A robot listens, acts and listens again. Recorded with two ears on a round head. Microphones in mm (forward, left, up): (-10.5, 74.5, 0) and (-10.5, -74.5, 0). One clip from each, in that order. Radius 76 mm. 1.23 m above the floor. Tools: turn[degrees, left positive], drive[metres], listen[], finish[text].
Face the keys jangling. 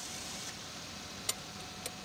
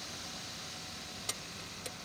Thought: The keys jangling: about 20° left or 160° left.
Action: turn[20]
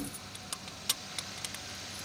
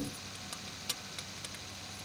Thought: So it is at 145° left.
Action: turn[145]
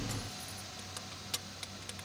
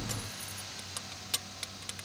Thought: The keys jangling is now 15° right.
Action: turn[-15]
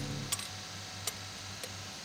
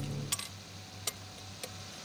Action: finish[Found it: keys jangling, straight ahead.]